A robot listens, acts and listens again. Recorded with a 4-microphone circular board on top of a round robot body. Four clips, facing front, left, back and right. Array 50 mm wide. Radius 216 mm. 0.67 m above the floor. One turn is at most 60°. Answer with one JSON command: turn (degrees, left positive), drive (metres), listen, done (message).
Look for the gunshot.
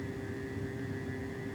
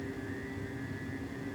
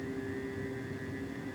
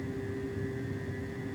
{"listen": true}
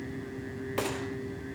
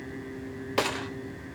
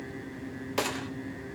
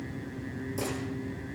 {"turn": 60}
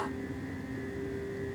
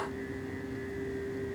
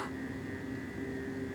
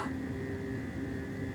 {"turn": 40}
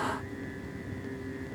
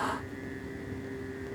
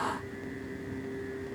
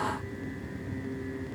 {"done": "I heard a gunshot from this way, but can't make it out now."}